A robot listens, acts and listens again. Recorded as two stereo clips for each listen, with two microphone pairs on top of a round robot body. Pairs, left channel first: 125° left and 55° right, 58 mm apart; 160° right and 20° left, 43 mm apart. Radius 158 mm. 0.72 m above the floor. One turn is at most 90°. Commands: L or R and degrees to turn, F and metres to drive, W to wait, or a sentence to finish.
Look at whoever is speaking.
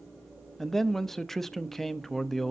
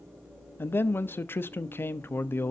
R90
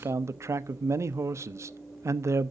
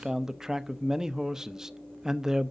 R55
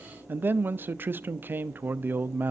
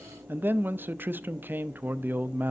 R10
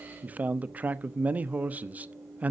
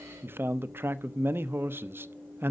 Found it: a man speaking, straight ahead, under 1 m away.